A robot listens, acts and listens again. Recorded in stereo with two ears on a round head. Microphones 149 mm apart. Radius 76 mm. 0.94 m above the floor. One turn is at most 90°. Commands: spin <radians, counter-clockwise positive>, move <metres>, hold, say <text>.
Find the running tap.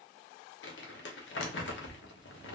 hold
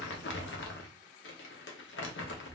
hold
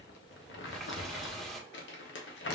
spin 0.52
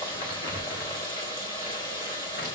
spin 1.57
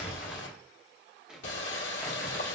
spin 1.31
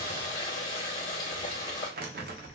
spin 0.44
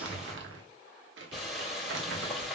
say Facing the running tap, 1 to 2 m away.